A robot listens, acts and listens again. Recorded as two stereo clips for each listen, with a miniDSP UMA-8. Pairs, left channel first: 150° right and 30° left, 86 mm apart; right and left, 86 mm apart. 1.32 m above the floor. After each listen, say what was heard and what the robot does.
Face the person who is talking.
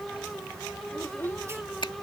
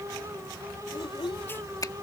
The child speaking: 85° right. Turn 85° right.
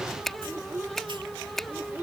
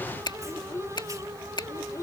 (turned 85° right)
The child speaking is now 40° right. Turn 40° right.
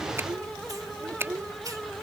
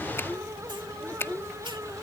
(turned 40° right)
The child speaking is now 20° right. Turn 20° right.
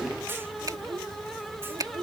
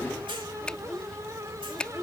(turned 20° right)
Found it: a child speaking, straight ahead.